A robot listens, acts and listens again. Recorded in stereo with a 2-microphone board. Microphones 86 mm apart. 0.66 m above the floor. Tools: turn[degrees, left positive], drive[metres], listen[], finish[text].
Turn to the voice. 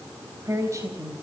Thought: The woman speaking: about 35° right or 145° right.
Action: turn[-35]
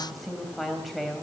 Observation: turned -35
Action: finish[Found it: a woman speaking, straight ahead, 2 to 4 m away.]